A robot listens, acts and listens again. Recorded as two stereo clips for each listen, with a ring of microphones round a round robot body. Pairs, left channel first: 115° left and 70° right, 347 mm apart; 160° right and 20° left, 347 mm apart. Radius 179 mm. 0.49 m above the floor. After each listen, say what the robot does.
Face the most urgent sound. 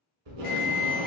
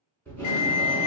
Turn 165° left.
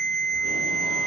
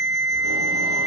Turn 30° left.
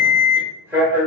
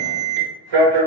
Turn 15° left.
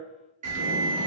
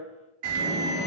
Found it: an alarm, straight ahead.